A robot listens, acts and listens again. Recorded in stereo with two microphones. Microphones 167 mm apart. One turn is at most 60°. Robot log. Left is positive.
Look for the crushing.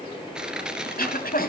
cmd yaw -30
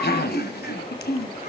cmd idle
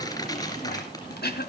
cmd idle
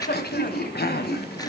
end: I heard crushing, but can't make it out now. It was about 25° left or 145° right.